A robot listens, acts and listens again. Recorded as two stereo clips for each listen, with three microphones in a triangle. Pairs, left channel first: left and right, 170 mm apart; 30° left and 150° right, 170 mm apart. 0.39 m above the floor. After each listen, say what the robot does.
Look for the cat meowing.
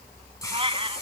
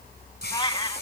Turn 35° right.
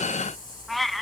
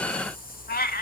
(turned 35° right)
Facing the cat meowing.